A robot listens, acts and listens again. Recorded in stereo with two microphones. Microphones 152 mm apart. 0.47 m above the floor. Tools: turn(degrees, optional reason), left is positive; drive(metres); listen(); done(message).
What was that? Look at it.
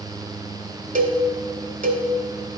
turn(degrees=-75, reason="The cowbell: about 75° right or 105° right.")
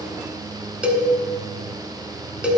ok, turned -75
turn(degrees=-10, reason="So it is at 10° right.")
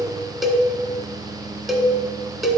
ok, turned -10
done("Facing the cowbell.")